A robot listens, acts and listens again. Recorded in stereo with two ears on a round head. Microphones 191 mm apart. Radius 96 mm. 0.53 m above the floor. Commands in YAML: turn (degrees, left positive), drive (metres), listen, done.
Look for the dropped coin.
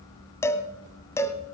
listen: true
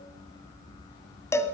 listen: true
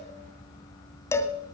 done: "I can't make out a dropped coin to turn to."